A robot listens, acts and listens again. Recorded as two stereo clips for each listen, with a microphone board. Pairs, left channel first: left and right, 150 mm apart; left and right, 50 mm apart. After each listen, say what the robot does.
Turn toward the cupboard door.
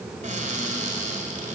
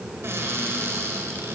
Turn 60° right.
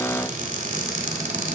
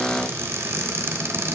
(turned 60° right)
Turn 60° right.
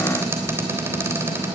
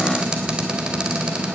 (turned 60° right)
Turn 15° right.
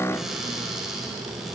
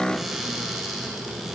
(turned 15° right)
Facing the cupboard door, 2 to 4 m away.